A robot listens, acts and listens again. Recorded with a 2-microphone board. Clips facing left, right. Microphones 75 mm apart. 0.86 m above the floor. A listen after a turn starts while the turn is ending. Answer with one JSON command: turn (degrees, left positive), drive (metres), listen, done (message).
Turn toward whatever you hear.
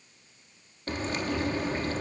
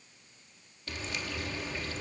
{"turn": 45}
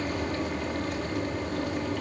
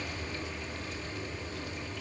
{"turn": 85}
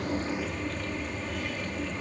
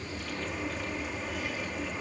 {"done": "Found it: frying, straight ahead, 1 to 2 m away."}